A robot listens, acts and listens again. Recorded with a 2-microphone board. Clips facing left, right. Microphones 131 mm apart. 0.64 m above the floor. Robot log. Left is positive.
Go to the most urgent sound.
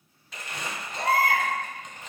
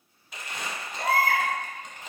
note: The baby crying: about 65° left or 115° left.
cmd yaw +65
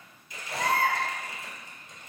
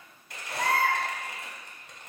note: So it is at 50° left.
cmd yaw +50
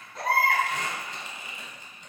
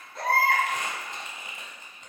cmd fwd 1.0
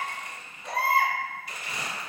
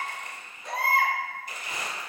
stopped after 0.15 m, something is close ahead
end: Something is in my way. I am facing the baby crying but have not reached it.